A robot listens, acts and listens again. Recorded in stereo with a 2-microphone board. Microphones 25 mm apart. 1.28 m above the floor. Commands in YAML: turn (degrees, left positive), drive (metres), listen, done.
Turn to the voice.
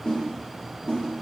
listen: true
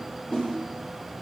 listen: true
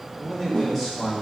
turn: 15
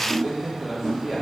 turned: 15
done: "Found it: a man speaking, straight ahead."